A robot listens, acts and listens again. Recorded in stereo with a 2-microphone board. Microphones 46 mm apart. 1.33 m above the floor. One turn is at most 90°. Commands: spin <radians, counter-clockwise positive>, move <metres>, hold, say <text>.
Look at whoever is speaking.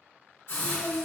spin 0.44
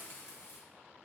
hold
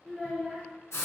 say Found it: a child speaking, straight ahead, under 1 m away.